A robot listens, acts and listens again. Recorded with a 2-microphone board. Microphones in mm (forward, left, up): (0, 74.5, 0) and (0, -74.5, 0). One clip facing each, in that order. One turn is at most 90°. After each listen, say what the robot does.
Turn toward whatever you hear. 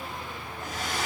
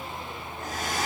Turn 45° right.
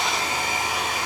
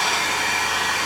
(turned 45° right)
Turn 90° right.
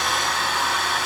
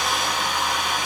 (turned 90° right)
Turn 15° right.
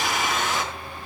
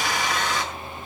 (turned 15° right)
Found it: a hair dryer, straight ahead, over 4 m away.